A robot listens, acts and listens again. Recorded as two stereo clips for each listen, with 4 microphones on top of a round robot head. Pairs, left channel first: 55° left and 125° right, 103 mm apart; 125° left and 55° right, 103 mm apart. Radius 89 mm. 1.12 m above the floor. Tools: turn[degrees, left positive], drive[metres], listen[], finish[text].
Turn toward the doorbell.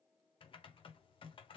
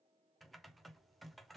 Action: listen[]
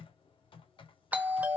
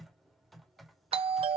Thought: The doorbell: 50° right.
Action: turn[-50]
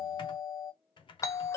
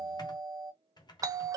Action: finish[Found it: a doorbell, straight ahead, under 1 m away.]